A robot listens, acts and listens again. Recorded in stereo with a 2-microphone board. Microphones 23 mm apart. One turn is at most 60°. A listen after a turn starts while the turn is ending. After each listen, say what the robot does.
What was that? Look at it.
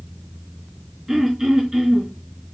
Turn 15° right.
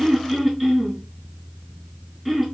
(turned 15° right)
Facing the throat clearing, 2 to 4 m away.